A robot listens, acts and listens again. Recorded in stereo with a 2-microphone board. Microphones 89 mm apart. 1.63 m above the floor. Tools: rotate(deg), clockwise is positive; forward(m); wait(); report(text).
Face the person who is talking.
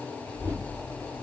rotate(55)
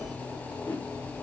rotate(70)
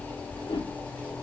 rotate(30)
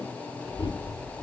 report("Found it: a child speaking, straight ahead, over 4 m away.")